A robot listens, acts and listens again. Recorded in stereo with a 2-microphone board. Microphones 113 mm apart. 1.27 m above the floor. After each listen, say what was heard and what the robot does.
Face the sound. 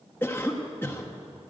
The cough: about 20° left or 160° left. Turn 20° left.
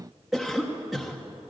Facing the cough.